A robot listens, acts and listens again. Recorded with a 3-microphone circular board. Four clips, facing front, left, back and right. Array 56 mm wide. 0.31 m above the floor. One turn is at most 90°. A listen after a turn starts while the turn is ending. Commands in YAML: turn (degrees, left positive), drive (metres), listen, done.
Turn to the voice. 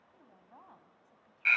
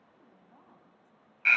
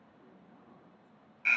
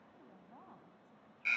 turn: -20
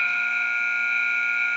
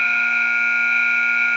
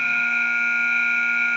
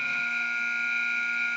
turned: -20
listen: true
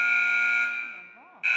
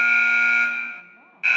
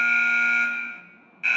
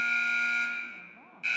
done: "Found it: a woman speaking, straight ahead, 2 to 4 m away."